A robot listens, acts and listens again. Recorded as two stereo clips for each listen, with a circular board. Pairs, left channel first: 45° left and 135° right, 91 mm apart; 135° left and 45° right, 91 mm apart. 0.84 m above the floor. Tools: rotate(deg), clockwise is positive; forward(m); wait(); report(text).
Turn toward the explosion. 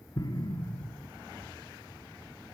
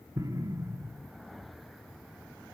report("Facing the explosion.")